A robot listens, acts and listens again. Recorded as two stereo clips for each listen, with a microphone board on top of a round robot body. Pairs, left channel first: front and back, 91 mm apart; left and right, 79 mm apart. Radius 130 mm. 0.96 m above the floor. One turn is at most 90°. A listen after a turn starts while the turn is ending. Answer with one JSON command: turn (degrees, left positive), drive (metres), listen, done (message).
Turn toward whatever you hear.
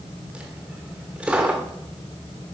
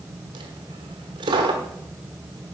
{"turn": -90}
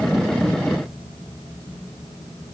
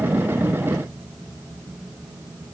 {"turn": -15}
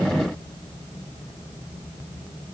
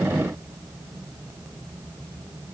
{"done": "I heard a dropped coin from this way, but can't make it out now."}